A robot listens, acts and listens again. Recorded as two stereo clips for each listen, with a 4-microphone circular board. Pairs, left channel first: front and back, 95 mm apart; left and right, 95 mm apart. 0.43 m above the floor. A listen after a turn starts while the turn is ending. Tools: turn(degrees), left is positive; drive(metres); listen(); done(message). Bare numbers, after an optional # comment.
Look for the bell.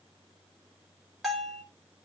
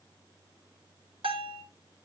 # The bell: 90° right.
turn(-90)
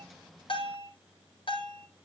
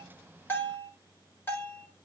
# The bell is now 25° left.
turn(25)
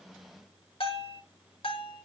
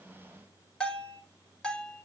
# The bell is now 10° left.
turn(10)
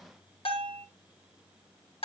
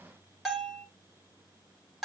done("Found it: a bell, straight ahead.")